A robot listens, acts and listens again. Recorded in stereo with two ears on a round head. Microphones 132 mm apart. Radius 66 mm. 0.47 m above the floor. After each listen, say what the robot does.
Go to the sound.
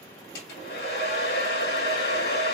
Turn 90° left.
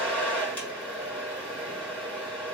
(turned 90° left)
Turn 10° left.
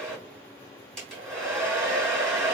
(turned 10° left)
Drive 1.0 m forward.
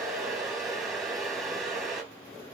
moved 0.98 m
Drive 1.0 m forward.
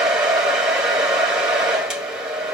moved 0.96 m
Drive 1.0 m forward.
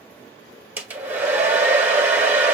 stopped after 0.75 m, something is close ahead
Turn 15° right.
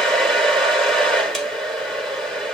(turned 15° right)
Arrived at the hair dryer, straight ahead.